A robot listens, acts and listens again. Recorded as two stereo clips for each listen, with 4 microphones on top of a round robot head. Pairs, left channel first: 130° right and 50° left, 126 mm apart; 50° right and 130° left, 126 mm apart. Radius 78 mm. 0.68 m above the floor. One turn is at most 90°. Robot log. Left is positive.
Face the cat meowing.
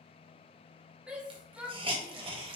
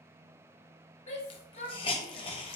cmd idle
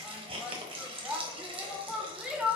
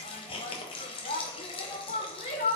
cmd idle
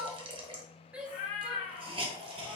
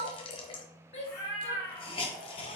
note: The cat meowing: 110° right.
cmd yaw -90
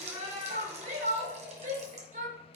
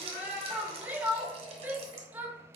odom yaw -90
note: Nothing new. It was at 20° right.
cmd yaw -20
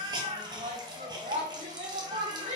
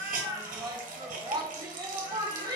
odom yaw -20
end: Facing the cat meowing.